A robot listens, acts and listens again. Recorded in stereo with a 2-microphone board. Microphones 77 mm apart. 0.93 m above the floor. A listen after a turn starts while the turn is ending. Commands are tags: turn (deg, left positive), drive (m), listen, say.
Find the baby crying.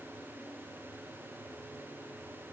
<listen/>
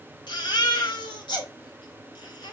<turn deg="90"/>
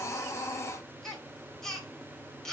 <say>Found it: a baby crying, straight ahead.</say>